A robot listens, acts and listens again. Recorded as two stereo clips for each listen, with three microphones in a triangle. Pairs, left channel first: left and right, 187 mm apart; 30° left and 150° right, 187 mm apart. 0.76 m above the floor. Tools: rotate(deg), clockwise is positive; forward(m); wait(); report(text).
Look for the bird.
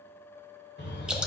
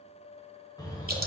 rotate(-95)
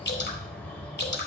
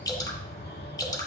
rotate(-10)
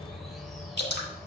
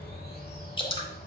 report("Found it: a bird, straight ahead.")